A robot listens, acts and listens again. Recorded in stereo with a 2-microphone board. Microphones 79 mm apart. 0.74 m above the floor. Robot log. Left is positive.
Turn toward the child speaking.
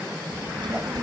note: The child speaking: about 65° right or 115° right.
cmd yaw -65
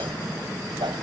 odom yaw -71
cmd idle
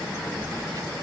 note: So it is at 45° right.
cmd yaw -45
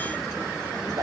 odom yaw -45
cmd idle
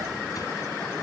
cmd idle
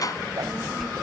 end: Found it: a child speaking, straight ahead.